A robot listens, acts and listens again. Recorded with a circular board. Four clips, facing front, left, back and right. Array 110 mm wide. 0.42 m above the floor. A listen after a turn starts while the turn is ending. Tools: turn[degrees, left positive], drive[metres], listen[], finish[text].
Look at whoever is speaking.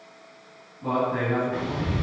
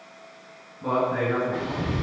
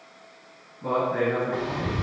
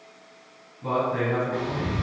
Thought: The man speaking: 105° left.
Action: turn[105]
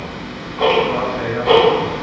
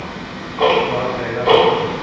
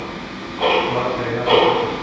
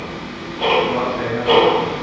Action: listen[]
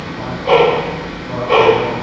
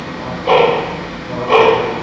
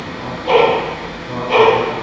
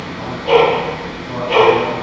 Action: listen[]
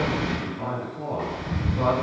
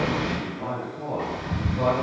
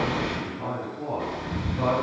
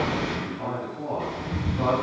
Action: finish[Found it: a man speaking, straight ahead.]